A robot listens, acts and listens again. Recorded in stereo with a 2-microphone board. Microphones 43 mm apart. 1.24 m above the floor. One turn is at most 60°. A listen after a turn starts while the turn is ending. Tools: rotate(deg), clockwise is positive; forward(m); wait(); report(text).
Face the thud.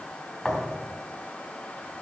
rotate(-30)
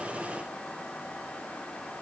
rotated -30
wait()
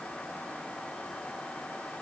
report("I heard a thud, but can't make it out now. It was about 30° right or 150° left.")